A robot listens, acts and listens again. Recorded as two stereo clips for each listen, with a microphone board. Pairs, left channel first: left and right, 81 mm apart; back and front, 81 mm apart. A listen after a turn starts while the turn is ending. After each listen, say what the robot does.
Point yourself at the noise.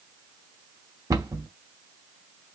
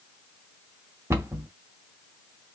Turn 55° right.
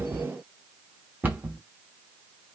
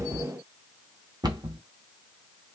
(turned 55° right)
Turn 25° right.
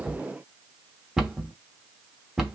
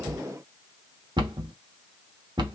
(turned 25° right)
Facing the cupboard door, 1 to 2 m away.